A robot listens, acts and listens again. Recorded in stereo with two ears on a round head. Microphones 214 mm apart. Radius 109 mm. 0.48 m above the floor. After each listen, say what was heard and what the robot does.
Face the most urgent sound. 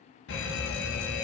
The fire alarm: about 55° left or 125° left. Turn 55° left.
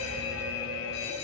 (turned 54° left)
So it is at 70° left. Turn 70° left.
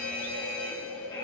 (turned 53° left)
The fire alarm is now 15° left. Turn 15° left.
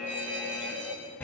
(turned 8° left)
The fire alarm is now 10° left. Turn 10° left.
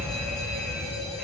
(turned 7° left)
Found it: a fire alarm, straight ahead, over 4 m away.